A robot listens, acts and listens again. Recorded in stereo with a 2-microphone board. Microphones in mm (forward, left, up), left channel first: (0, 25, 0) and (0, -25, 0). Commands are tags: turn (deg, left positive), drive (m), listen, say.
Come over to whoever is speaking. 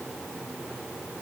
<listen/>
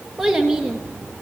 <turn deg="-30"/>
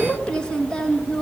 <turn deg="20"/>
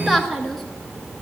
<drive m="1.0"/>
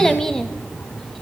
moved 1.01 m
<turn deg="10"/>
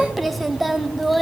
<drive m="1.0"/>
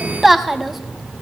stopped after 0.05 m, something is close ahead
<say>Arrived at the child speaking, straight ahead.</say>